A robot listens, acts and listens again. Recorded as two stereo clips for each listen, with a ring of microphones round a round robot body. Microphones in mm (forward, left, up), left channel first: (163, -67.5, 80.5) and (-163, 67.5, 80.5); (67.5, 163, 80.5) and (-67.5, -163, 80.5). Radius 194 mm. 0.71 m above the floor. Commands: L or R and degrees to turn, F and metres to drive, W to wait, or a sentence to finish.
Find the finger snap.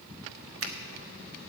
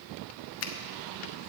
L110
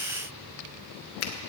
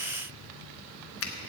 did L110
L20
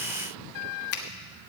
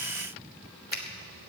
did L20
Found it: a finger snap, straight ahead, 1 to 2 m away.